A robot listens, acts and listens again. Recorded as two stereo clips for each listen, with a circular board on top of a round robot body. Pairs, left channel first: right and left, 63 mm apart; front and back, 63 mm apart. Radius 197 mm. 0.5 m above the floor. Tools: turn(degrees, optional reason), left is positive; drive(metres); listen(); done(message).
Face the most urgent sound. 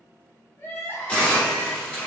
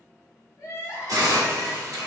turn(degrees=-35, reason="The crying: 35° right.")
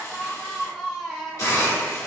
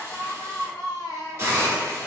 done("Found it: crying, straight ahead.")